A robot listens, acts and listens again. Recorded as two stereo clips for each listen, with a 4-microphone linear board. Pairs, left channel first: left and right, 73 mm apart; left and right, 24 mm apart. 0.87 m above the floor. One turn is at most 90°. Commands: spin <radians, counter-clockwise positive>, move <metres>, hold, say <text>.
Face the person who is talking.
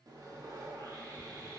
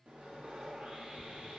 hold
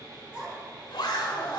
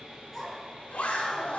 spin -0.52
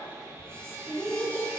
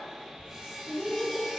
spin 0.35
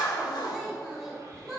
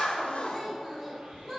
say Found it: a child speaking, straight ahead.